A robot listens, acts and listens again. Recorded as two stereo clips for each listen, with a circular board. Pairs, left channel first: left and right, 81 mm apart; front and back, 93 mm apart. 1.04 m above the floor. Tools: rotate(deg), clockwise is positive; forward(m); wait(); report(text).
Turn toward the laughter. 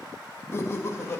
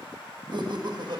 rotate(-145)
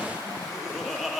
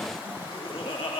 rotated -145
report("Found it: laughter, straight ahead.")